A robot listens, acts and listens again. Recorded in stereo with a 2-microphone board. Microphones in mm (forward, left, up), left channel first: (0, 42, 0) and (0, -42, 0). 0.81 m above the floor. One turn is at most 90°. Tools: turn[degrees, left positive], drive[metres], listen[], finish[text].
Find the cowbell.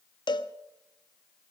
Thought: The cowbell: about 65° left or 115° left.
Action: turn[65]
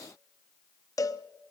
Thought: So it is at 45° left.
Action: turn[45]
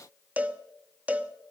Thought: The cowbell is now 20° right.
Action: turn[-20]
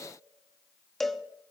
Action: finish[Found it: a cowbell, straight ahead, under 1 m away.]